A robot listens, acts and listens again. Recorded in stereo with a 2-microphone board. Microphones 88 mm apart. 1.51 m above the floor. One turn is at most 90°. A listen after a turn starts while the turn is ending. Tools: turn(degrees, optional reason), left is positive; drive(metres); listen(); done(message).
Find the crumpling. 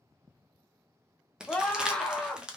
turn(degrees=-30)
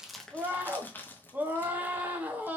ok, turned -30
turn(degrees=25, reason="So it is at 25° left.")
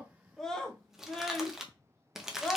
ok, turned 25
done("Facing the crumpling.")